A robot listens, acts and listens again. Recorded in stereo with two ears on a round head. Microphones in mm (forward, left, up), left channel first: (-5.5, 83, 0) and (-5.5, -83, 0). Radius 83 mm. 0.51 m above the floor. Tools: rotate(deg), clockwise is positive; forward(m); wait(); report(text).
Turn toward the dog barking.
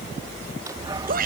rotate(25)
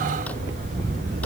rotate(130)
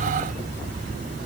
rotate(45)
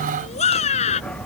report("Facing the dog barking.")